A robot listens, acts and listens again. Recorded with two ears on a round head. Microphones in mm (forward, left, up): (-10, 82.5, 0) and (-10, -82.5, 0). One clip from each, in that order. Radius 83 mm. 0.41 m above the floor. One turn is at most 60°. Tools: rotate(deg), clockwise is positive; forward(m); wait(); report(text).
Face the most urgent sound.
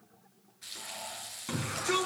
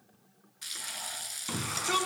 rotate(20)
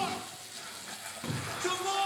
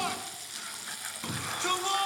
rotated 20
rotate(60)
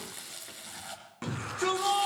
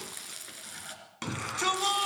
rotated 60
rotate(60)
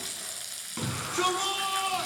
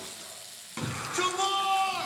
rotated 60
rotate(10)
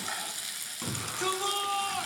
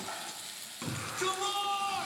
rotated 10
report("Facing the shout, 2 to 4 m away.")